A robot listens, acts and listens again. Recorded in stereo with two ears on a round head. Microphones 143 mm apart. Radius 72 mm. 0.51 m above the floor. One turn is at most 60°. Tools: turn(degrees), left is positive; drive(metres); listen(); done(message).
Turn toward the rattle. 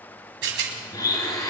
turn(degrees=-60)
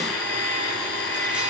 listen()
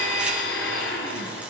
listen()
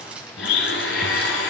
turn(degrees=-10)
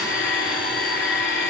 listen()
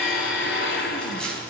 done("Facing the rattle, 2 to 4 m away.")